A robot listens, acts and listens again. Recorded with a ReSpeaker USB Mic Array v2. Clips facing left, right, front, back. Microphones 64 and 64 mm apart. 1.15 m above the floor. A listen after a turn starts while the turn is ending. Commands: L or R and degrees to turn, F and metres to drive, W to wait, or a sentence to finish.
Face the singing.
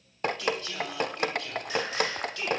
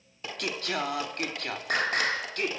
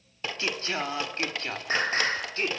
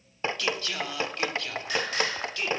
R55
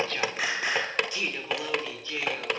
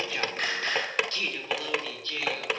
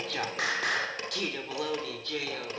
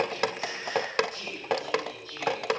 L15
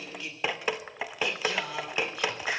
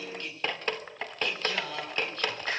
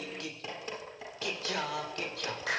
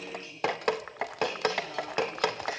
L10
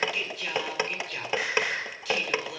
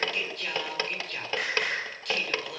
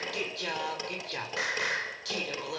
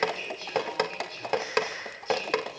Facing the singing.